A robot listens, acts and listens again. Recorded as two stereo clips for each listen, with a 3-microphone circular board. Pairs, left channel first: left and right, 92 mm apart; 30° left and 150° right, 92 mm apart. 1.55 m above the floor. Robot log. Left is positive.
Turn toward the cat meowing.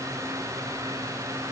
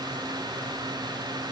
cmd idle
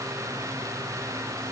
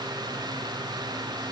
cmd idle
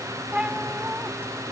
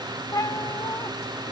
note: The cat meowing: 20° right.
cmd yaw -20
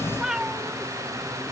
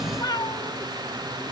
note: The cat meowing is now 10° right.
cmd yaw -10
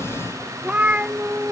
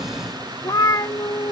note: The cat meowing is now 20° right.
cmd yaw -20
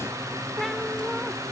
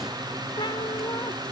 cmd idle
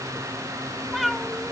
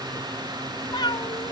end: Facing the cat meowing.